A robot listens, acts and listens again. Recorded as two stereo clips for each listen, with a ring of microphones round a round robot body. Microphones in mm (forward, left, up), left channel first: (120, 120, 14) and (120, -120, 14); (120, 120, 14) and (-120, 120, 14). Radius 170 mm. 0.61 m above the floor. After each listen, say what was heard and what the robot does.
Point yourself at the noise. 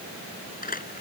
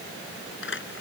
The crumpling: 35° left. Turn 35° left.
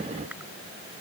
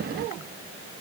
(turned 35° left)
Keep listening.
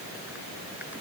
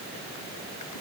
Keep listening.
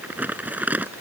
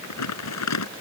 Found it: crumpling, straight ahead.